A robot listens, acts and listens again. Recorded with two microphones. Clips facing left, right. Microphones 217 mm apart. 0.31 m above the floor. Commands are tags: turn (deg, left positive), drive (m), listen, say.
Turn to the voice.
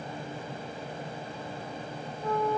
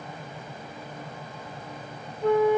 <listen/>
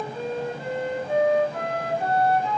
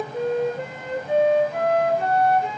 <listen/>
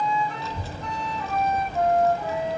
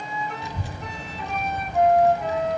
<turn deg="-15"/>
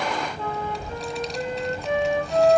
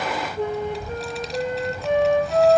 <say>Facing the child speaking, 1 to 2 m away.</say>